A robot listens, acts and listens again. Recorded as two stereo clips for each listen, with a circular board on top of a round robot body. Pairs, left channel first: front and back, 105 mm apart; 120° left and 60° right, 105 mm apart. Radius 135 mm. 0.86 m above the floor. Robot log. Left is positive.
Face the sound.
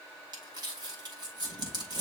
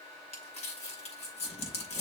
note: The crumpling: 130° left.
cmd yaw +130
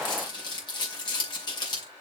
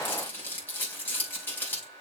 note: The crumpling is now 50° left.
cmd yaw +50
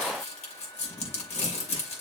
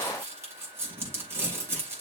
end: Found it: crumpling, straight ahead, 2 to 4 m away.